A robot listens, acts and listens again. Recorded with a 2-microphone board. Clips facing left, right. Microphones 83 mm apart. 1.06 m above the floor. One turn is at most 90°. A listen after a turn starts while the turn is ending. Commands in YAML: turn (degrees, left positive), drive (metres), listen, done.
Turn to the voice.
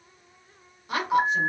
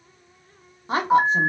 turn: -30
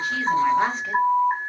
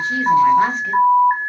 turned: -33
listen: true
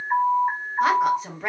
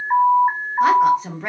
done: "Found it: a woman speaking, straight ahead."